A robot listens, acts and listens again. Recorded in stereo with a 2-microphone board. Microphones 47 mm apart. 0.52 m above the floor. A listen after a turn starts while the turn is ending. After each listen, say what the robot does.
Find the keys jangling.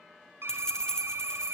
Turn 30° left.
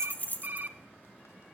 Turn 135° left.
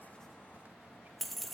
Facing the keys jangling, 1 to 2 m away.